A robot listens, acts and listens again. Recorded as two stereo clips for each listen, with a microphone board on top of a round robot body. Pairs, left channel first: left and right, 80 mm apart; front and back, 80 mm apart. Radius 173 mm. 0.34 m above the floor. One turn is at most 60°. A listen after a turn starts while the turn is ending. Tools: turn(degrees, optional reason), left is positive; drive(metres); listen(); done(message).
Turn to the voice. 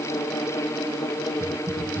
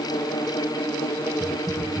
listen()
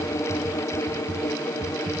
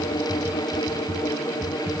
listen()
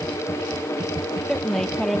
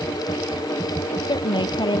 done("Facing the woman speaking.")